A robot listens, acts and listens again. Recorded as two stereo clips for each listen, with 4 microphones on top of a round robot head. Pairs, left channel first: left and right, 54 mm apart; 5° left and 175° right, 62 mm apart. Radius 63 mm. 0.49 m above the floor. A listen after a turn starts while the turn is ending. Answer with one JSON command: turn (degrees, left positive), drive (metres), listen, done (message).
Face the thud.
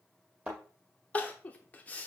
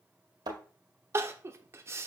{"turn": -165}
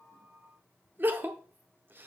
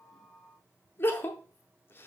{"done": "Facing where the thud came from. I can't hear it now."}